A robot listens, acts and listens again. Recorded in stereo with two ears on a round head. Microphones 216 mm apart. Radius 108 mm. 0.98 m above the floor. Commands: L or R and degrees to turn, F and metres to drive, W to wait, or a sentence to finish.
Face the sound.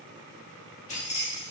L25
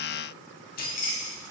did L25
L35
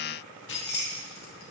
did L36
L135
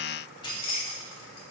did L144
L25
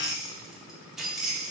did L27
Found it: keys jangling, straight ahead.